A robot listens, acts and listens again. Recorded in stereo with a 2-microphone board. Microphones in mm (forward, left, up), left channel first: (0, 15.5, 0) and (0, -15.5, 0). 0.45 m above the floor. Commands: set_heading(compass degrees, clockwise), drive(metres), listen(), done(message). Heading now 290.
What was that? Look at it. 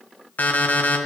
set_heading(230)
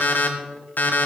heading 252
set_heading(172)
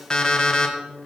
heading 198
set_heading(173)
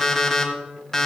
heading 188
set_heading(173)
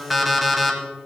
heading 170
done("Facing the alarm clock, 1 to 2 m away.")